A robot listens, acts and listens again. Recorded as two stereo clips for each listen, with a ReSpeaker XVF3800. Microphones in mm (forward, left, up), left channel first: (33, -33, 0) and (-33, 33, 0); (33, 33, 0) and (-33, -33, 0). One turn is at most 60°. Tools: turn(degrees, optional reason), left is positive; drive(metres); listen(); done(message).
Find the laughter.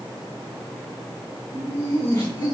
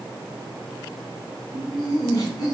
done("Found it: laughter, straight ahead.")